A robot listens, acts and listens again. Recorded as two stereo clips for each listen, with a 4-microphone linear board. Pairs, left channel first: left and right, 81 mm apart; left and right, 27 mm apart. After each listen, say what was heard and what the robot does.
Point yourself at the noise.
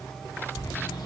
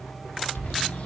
The bird: about 65° left or 115° left. Turn 65° left.
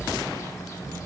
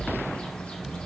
So it is at 45° left. Turn 45° left.
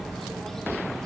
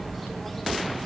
Found it: a bird, straight ahead, 1 to 2 m away.